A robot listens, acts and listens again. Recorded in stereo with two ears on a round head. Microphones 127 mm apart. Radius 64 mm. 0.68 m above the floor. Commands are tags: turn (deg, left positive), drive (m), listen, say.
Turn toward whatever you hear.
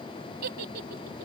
<turn deg="-90"/>
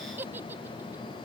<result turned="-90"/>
<turn deg="-15"/>
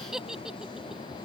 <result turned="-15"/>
<say>Facing the giggle.</say>